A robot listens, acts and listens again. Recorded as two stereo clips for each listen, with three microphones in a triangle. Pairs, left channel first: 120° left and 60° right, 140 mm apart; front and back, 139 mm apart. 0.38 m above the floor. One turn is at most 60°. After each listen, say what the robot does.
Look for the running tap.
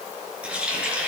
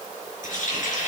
Turn 20° left.
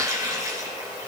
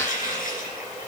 Found it: a running tap, straight ahead.